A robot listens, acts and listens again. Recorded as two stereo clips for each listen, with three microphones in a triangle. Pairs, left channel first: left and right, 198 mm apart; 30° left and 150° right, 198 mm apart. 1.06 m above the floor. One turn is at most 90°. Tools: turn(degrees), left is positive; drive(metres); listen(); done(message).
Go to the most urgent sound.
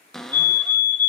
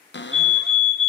turn(degrees=-90)
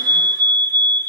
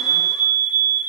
turn(degrees=10)
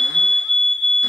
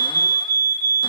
drive(metres=1.0)
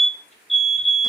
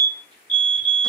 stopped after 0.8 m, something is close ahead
done("Arrived at the fire alarm, straight ahead.")